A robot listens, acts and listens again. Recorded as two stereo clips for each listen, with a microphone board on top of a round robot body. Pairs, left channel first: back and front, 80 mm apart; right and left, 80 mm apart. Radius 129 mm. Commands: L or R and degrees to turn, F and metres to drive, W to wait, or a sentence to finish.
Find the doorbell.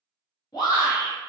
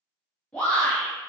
W
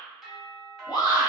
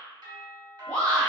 L90
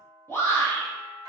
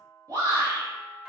L20
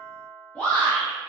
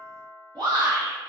Facing the doorbell, 1 to 2 m away.